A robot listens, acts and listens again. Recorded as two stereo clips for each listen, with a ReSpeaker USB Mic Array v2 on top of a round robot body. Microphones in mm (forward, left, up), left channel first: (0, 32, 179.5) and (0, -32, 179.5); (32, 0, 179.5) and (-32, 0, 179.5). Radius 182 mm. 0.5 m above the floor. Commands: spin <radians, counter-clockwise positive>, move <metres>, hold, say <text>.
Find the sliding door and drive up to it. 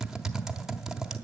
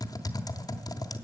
hold
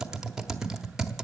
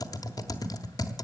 hold
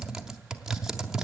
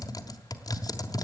say I can't make out a sliding door, only typing on a keyboard.